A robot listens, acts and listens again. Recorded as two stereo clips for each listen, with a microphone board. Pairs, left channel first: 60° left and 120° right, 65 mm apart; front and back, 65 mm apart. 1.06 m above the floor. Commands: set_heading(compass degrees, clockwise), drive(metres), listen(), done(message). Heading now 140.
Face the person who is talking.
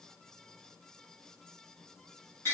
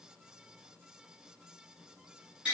listen()
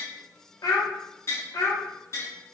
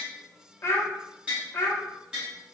set_heading(90)
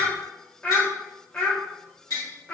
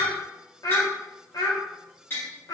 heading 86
done("Facing the child speaking.")